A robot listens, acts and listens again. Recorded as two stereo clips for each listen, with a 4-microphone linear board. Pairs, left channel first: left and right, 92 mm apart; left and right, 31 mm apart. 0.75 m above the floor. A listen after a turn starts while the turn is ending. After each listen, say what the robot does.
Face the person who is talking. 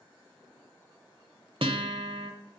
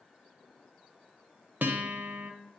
Keep listening.
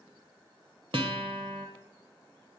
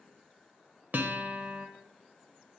Keep listening.
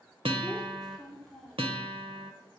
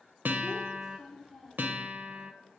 Turn 30° left.
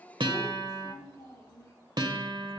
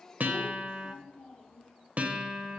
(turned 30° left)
Turn 145° left.
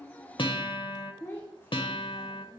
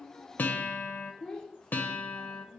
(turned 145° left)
Turn 20° left.
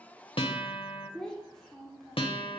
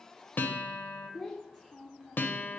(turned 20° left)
Found it: a child speaking, straight ahead.